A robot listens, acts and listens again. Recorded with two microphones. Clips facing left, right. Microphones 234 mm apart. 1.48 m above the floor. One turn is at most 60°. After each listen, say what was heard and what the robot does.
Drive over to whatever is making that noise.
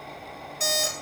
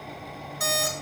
The alarm clock: about 25° left or 155° left. Turn 25° left.
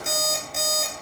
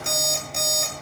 Drive 1.0 m forward.
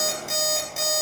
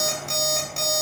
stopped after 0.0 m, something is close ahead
Blocked. The alarm clock is further on, straight ahead.